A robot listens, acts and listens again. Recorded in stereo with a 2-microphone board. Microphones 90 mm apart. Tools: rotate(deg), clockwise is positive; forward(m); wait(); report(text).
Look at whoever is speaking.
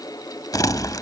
wait()
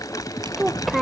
rotate(-30)
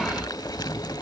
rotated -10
wait()
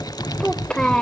rotate(-30)
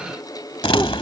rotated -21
wait()
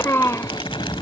rotate(-150)
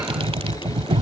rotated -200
rotate(50)
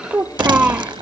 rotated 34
rotate(20)
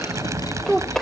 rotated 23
report("Found it: a child speaking, straight ahead.")